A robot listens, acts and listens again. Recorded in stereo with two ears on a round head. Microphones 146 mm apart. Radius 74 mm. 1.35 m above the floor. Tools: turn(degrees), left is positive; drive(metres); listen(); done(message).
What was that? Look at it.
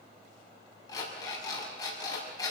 turn(degrees=25)
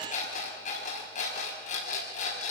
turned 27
turn(degrees=130)
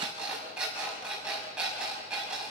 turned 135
done("Facing the alarm clock, over 4 m away.")